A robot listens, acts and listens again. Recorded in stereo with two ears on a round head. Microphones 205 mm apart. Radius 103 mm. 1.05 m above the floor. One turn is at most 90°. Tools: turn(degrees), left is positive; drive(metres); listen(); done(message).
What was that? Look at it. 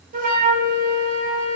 turn(degrees=-35)
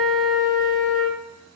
done("Facing the flute.")